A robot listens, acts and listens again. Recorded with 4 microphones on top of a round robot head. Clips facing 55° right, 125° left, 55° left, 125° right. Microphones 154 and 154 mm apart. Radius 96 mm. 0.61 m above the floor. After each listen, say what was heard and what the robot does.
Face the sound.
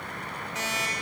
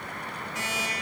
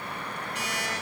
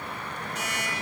The alarm clock: 15° left. Turn 15° left.
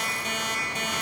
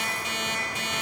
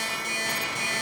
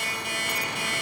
Facing the alarm clock.